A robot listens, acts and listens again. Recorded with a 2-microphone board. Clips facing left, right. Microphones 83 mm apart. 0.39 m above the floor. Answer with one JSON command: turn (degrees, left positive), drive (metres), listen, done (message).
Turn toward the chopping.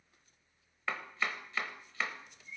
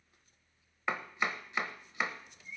{"turn": -20}
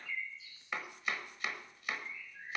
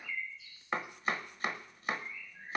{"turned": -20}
{"turn": -140}
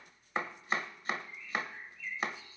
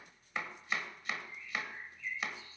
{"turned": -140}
{"turn": 40}
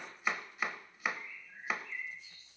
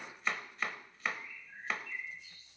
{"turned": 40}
{"turn": 10}
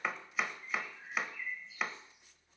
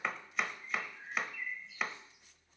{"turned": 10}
{"done": "Facing the chopping, under 1 m away."}